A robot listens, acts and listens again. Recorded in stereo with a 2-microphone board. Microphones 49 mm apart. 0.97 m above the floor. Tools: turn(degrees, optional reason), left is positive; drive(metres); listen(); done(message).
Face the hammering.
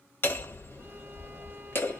turn(degrees=45, reason="The hammering: about 45° left or 135° left.")
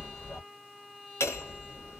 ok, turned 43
turn(degrees=85, reason="So it is at 85° left.")
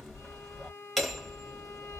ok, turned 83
done("Facing the hammering.")